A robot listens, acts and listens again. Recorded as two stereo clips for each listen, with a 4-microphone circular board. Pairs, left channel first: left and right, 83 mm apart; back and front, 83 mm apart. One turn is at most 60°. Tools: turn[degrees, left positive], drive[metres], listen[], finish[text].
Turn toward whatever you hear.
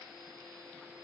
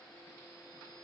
Action: listen[]
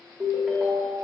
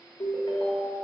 Thought: The ringtone: 165° right.
Action: turn[-60]
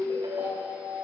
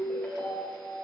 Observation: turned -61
Thought: The ringtone is now 105° right.
Action: turn[-60]
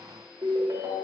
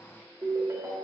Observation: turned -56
Thought: The ringtone is now 50° right.
Action: turn[-50]
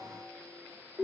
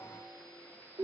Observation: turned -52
Action: finish[Facing the ringtone.]